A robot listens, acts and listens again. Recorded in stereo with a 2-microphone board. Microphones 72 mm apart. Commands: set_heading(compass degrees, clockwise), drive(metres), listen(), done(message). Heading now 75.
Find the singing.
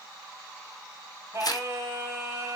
set_heading(110)
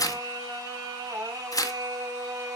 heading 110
set_heading(240)
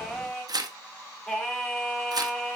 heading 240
set_heading(225)
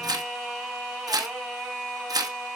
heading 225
done("Facing the singing.")